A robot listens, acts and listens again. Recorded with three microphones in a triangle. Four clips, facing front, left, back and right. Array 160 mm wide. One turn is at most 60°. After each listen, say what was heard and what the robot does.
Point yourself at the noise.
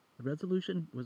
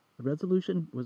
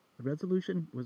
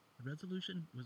The man speaking: 95° left. Turn 60° left.
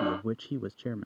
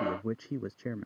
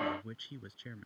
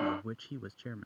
The man speaking is now 35° left. Turn 35° left.
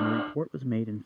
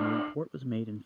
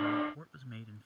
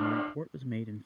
The man speaking is now 20° left. Turn 20° left.
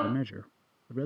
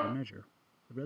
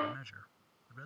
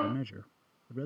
Facing the man speaking.